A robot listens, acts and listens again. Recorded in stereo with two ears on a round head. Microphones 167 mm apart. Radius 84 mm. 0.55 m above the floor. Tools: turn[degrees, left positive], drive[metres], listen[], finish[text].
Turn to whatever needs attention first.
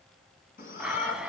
Thought: The shout: about 50° left or 130° left.
Action: turn[50]
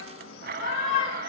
Thought: So it is at 80° left.
Action: turn[80]
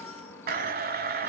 Thought: The shout is now 15° left.
Action: turn[15]
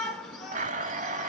Action: finish[Facing the shout, over 4 m away.]